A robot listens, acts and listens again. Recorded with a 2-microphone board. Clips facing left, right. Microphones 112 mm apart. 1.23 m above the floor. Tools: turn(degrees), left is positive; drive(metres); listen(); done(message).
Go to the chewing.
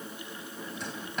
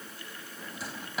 listen()
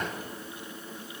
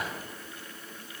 listen()
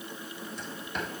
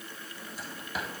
done("I can't make out chewing, only a drawer.")